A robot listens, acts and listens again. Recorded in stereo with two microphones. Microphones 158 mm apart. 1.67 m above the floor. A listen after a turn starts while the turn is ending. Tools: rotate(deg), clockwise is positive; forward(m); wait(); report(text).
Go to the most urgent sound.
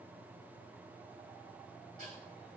wait()
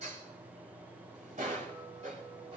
wait()
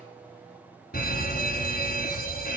rotate(-65)
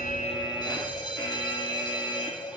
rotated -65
rotate(-30)
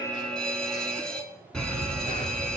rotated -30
forward(1.0)
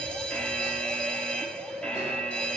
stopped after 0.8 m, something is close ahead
report("Arrived at the fire alarm, straight ahead.")